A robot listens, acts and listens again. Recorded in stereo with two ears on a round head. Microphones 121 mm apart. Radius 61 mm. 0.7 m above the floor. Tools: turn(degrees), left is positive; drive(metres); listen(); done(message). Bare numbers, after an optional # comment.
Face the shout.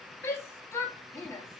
# The shout: about 20° left or 160° left.
turn(20)
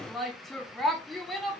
done("Found it: a shout, straight ahead, 1 to 2 m away.")